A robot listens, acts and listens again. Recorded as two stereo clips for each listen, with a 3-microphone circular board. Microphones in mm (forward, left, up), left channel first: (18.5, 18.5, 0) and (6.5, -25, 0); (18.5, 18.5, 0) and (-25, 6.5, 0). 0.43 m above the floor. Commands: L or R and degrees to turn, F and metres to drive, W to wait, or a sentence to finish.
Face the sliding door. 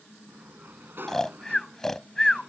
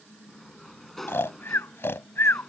R70
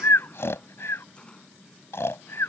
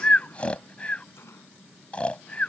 W
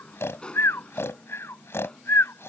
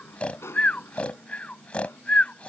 L10
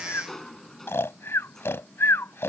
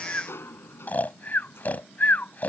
Found it: a sliding door, straight ahead.